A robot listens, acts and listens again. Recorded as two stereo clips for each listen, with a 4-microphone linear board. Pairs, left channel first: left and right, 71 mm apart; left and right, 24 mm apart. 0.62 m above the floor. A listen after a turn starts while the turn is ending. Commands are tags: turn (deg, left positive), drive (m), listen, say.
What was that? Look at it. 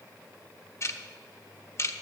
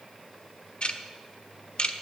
<turn deg="40"/>
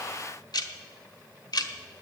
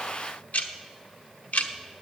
<turn deg="95"/>
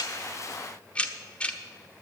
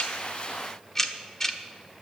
<turn deg="15"/>
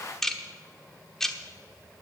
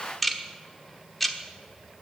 <say>Found it: ticking, straight ahead, 1 to 2 m away.</say>